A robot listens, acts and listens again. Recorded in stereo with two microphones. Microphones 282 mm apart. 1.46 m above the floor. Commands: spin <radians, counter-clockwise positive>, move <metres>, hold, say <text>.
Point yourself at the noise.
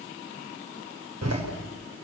spin -1.13
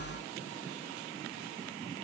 hold
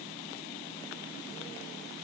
say I heard a door slam, but can't make it out now. It was about straight ahead or 50° right.